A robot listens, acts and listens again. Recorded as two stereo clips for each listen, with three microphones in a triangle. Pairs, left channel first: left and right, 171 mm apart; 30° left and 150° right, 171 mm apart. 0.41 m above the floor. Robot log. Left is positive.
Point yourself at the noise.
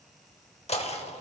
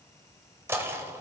note: The knocking: 135° left.
cmd yaw +135
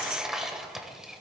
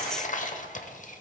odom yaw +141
end: Found it: knocking, straight ahead, under 1 m away.